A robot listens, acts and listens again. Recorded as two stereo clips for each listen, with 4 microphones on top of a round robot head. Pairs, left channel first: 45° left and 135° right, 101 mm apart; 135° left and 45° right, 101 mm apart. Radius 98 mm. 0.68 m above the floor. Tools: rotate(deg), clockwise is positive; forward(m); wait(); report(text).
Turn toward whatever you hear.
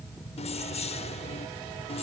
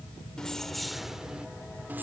rotate(-25)
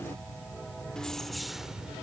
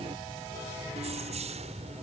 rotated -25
rotate(50)
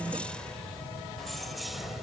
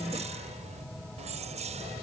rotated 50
rotate(45)
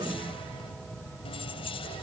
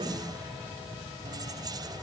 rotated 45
rotate(-10)
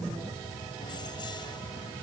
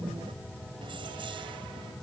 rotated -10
wait()
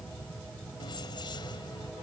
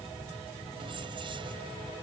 wait()
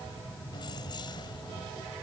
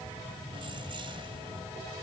report("I heard keys jangling from this way, but can't make it out now.")